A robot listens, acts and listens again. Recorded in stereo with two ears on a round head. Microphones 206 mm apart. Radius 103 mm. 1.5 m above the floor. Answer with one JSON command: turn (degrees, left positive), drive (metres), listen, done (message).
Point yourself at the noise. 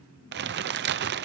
{"turn": -50}
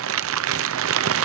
{"turn": -75}
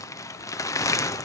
{"turn": 15}
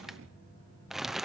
{"done": "Found it: crumpling, straight ahead, under 1 m away."}